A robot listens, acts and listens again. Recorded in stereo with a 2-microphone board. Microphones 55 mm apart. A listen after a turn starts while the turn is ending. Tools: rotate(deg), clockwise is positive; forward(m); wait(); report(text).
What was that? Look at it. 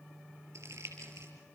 rotate(65)
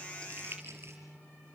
rotate(50)
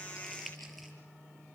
wait()
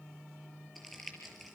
report("Facing the crumpling.")